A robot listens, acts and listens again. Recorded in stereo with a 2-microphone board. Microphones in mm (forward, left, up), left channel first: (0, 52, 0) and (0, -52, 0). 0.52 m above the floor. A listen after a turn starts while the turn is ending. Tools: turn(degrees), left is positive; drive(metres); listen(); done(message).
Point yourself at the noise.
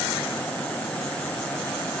listen()
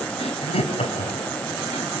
turn(degrees=90)
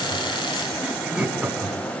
turn(degrees=-10)
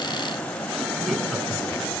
done("Found it: laughter, straight ahead, over 4 m away.")